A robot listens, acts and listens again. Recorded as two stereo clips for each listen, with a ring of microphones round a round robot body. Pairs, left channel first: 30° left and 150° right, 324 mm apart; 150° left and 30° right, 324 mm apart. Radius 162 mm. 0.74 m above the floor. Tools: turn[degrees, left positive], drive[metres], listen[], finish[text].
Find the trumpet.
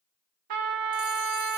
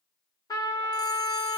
Thought: The trumpet: 130° right.
Action: turn[-130]
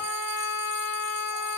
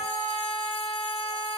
Action: finish[Facing the trumpet, 1 to 2 m away.]